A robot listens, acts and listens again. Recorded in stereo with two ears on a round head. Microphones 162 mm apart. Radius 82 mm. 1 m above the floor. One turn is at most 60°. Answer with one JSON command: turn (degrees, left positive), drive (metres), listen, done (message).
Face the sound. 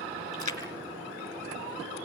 {"turn": 20}
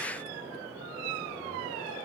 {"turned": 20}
{"listen": true}
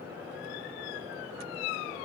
{"done": "I heard a splash, but can't make it out now. It was about straight ahead or 140° left."}